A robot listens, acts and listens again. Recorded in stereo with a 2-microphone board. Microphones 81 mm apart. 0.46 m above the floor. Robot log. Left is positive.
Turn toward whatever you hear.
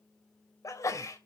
note: The sneeze: about 40° left or 140° left.
cmd yaw +40
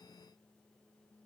cmd idle
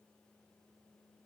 end: I heard a sneeze, but can't make it out now. It was about straight ahead or 100° left.